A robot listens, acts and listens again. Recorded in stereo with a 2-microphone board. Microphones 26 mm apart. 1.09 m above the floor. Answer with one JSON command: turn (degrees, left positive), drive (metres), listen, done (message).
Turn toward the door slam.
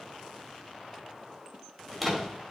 {"turn": 30}
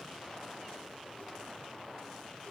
{"listen": true}
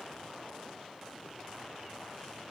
{"done": "I heard a door slam, but can't make it out now. It was about 30° right or 150° left."}